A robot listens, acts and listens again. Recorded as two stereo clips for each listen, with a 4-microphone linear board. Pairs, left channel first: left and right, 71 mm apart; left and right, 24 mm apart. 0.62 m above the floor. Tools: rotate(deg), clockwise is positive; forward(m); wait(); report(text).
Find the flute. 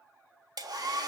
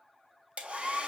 wait()
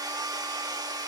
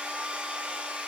wait()
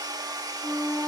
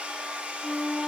rotate(-35)
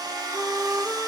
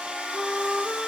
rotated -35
report("Found it: a flute, straight ahead, 2 to 4 m away.")